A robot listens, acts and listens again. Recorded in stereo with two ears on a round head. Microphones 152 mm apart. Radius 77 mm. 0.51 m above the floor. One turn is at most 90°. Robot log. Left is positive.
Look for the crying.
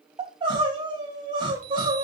note: The crying: about 30° right or 150° right.
cmd yaw -30
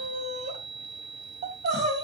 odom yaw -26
note: So it is at 125° right.
cmd yaw -90
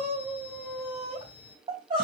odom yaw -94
note: The crying is now 30° right.
cmd yaw -30
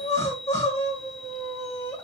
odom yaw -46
note: The crying is now 15° left.
cmd yaw +15
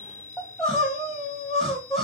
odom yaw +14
end: Found it: crying, straight ahead.